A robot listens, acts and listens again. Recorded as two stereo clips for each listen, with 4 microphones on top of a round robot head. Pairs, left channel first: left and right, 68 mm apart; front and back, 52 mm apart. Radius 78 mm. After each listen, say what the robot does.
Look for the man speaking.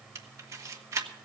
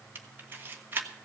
Keep listening.
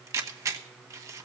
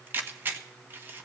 Keep listening.
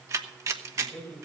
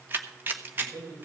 Turn 170° left.
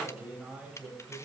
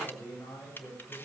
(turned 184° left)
Turn 20° right.
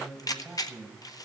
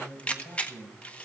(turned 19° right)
Facing the man speaking.